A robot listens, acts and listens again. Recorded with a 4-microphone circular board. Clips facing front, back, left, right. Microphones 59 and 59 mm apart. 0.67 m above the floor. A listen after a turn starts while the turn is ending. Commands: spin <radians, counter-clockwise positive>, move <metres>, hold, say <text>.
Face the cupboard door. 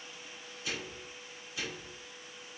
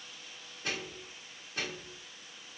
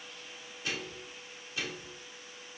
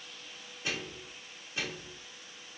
hold
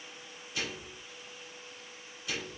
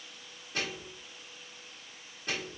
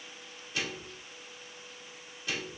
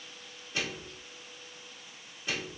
hold
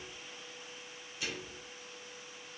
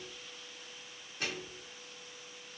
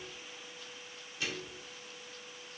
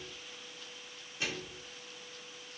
say I can't make out a cupboard door, only a microwave.